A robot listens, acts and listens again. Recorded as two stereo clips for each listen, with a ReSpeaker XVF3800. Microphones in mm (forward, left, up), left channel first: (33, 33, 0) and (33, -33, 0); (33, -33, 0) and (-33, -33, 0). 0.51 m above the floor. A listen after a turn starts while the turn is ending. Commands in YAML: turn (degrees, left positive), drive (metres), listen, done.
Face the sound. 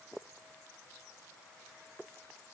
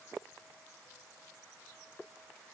listen: true
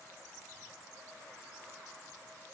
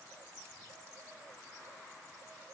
listen: true
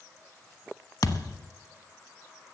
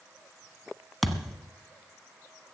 turn: 90
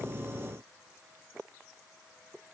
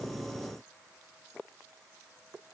done: "Facing where the thud came from. I can't hear it now."